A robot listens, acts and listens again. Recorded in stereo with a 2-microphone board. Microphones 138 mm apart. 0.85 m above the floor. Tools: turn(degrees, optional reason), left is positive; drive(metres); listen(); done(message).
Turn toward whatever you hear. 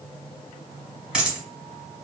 turn(degrees=-30)
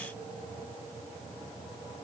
listen()
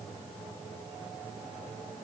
done("I heard a dropped coin, but can't make it out now. It was about 25° left or 145° right.")